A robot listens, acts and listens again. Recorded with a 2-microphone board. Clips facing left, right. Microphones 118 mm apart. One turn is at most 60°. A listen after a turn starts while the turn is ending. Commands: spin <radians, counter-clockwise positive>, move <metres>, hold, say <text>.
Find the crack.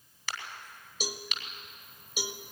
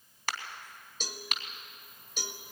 spin -0.87
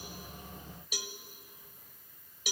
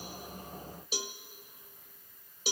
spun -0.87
hold
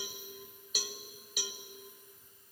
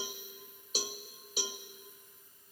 say I heard a crack, but can't make it out now. It was about straight ahead or 80° right.